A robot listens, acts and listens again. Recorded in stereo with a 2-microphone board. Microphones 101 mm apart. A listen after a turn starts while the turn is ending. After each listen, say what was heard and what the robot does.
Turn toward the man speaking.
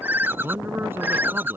The man speaking: about 20° right or 160° right. Turn 20° right.
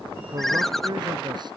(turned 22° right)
So it is at 135° right. Turn 135° right.
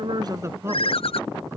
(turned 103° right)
The man speaking is now 25° right. Turn 25° right.
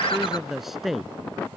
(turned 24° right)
Facing the man speaking.